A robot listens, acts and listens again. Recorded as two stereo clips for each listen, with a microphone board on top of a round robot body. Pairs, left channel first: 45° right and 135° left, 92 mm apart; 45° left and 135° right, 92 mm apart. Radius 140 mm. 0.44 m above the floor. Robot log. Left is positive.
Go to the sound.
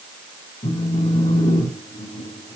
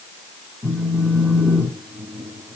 note: The phone buzzing: 55° right.
cmd yaw -55
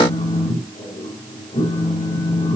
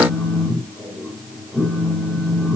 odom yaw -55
note: The phone buzzing is now 30° right.
cmd yaw -30
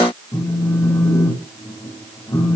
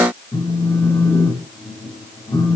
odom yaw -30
cmd fwd 1.0
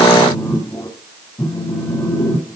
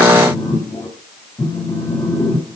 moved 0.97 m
cmd fwd 1.0
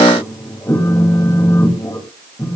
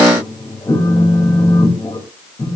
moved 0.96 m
note: The phone buzzing is now 10° left.
cmd yaw +10
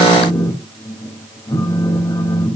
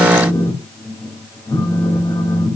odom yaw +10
cmd fwd 1.0
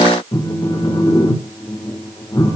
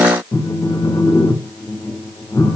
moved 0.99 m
cmd fwd 1.0
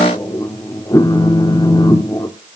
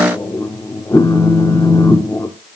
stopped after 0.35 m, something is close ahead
end: I am next to the phone buzzing.